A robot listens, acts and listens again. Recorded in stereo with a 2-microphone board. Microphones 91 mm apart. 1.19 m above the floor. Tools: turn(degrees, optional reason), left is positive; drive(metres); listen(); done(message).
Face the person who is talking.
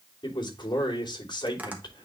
turn(degrees=55, reason="The man speaking: about 55° left or 125° left.")
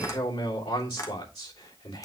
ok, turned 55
turn(degrees=70, reason="So it is at 70° left.")
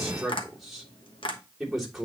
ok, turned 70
done("Found it: a man speaking, straight ahead.")